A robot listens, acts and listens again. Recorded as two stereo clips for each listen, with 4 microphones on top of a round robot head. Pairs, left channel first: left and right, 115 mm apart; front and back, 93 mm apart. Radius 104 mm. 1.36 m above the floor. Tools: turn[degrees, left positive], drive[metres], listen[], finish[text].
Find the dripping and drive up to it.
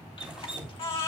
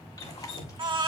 Thought: The dripping: 10° right.
Action: turn[-10]
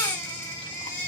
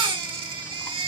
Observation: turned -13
Action: listen[]
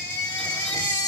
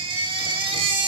Action: listen[]
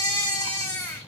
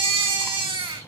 Action: finish[Facing where the dripping came from. I can't hear it now. I did not reach it.]